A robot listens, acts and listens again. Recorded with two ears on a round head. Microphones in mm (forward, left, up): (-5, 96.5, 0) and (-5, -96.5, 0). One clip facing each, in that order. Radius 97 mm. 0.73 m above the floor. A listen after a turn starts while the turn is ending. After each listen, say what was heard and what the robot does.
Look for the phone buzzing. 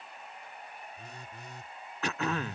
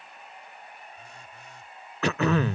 The phone buzzing: about 35° left or 145° left. Turn 35° left.
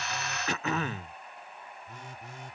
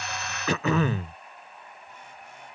So it is at 105° left. Turn 105° left.
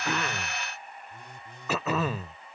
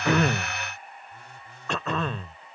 The phone buzzing is now 20° left. Turn 20° left.
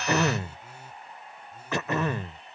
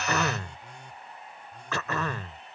Facing the phone buzzing.